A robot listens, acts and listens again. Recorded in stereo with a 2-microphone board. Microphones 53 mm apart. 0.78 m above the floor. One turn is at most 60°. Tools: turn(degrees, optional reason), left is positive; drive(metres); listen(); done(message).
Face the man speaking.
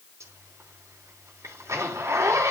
listen()
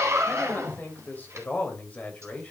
turn(degrees=25, reason="The man speaking: about 25° left or 155° left.")
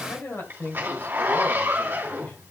turn(degrees=60, reason="So it is at 135° left.")
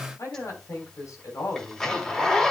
turn(degrees=60, reason="The man speaking is now 85° left.")
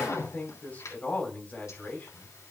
turn(degrees=25, reason="The man speaking is now 25° left.")
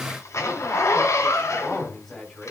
done("Found it: a man speaking, straight ahead, 2 to 4 m away.")